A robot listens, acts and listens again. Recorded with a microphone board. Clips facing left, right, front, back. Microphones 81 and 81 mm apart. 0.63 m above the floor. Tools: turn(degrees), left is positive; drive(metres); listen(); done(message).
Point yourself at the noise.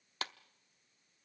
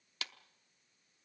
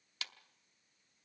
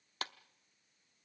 turn(degrees=135)
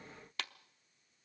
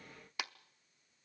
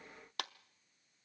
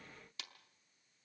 turn(degrees=-15)
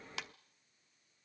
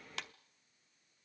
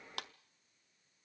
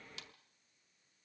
done("Found it: a clap, straight ahead, under 1 m away.")